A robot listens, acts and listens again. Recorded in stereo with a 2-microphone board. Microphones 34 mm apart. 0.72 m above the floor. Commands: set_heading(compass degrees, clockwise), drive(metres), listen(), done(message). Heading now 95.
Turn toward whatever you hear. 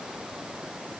listen()
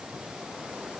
listen()
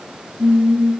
set_heading(165)
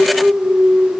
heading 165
done("Facing the singing.")